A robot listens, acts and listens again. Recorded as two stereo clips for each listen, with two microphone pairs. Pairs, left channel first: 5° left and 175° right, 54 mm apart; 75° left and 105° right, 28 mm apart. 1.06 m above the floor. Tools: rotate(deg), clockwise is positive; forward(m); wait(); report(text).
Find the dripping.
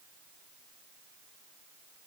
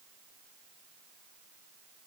wait()
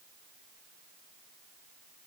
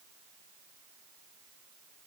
wait()
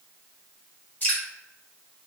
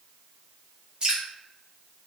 rotate(50)
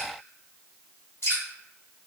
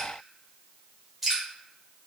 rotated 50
rotate(20)
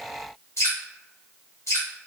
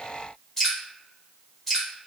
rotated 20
report("Facing the dripping.")